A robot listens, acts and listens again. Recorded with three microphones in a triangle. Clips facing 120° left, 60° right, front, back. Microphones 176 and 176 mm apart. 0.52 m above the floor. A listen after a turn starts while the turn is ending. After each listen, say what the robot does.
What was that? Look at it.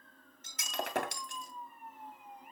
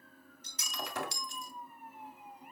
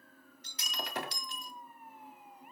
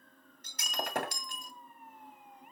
Turn 145° left.
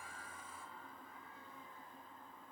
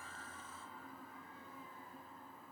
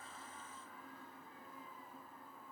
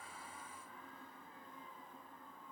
I heard breaking glass from this way, but can't make it out now.